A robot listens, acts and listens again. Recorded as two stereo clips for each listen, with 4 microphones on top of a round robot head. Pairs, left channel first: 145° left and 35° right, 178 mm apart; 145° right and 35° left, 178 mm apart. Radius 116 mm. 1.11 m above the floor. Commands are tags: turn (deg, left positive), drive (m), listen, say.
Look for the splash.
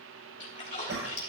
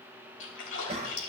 <turn deg="-160"/>
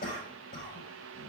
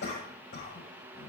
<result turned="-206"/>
<turn deg="45"/>
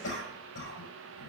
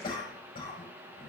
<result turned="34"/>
<turn deg="10"/>
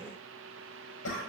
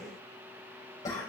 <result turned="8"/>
<say>Facing where the splash came from. I can't hear it now.</say>